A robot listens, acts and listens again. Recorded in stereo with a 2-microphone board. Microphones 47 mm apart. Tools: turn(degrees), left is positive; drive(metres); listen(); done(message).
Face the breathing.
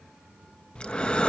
turn(degrees=20)
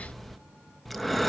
done("Facing the breathing, 1 to 2 m away.")